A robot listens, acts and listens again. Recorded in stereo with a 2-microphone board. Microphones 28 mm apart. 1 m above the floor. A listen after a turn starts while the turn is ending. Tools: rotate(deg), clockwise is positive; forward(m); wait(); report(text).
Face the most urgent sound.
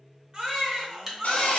rotate(30)
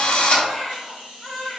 report("Found it: a baby crying, straight ahead, 1 to 2 m away.")